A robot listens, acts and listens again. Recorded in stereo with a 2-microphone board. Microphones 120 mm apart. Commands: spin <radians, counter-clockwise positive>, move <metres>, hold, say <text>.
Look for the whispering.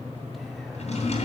hold
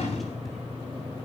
hold
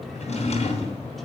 say I can't make out whispering, only a drawer.